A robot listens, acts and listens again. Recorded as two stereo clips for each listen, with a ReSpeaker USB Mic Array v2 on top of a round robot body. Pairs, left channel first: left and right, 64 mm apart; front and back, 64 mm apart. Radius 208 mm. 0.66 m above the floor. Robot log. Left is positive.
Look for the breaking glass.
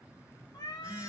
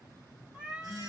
cmd idle
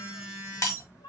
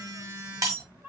note: The breaking glass: 140° left.
cmd yaw +140
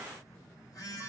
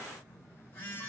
end: Facing where the breaking glass came from. I can't hear it now.